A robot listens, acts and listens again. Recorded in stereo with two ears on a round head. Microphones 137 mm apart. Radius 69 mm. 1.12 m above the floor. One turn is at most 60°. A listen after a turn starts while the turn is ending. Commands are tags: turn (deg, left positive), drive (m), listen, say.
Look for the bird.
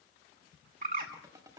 <turn deg="-60"/>
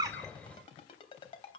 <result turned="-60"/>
<listen/>
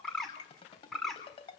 <say>Found it: a bird, straight ahead, 2 to 4 m away.</say>